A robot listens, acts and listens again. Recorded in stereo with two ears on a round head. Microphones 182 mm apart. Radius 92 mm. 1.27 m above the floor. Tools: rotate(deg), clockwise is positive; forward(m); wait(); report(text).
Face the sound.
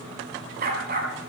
rotate(45)
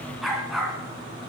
report("Found it: a dog barking, straight ahead.")